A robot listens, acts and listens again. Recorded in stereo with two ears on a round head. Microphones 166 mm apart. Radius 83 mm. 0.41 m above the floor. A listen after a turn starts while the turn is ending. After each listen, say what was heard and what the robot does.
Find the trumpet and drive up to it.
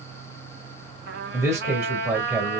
The trumpet: about 55° right or 125° right. Turn 55° right.
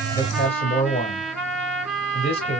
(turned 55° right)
Drive 1.0 m forward.
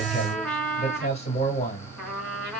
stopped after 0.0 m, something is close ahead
Something is in my way. I am facing the trumpet but have not reached it.